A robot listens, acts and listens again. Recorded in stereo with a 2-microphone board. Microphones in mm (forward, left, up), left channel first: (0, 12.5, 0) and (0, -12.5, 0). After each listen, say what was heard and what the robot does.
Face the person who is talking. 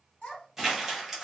The child speaking: about 45° left or 135° left. Turn 45° left.
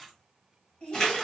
So it is at 90° left. Turn 90° left.
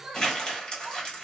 The child speaking is now 35° right. Turn 35° right.
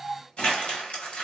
The child speaking is now 10° right. Turn 10° right.
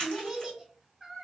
Facing the child speaking.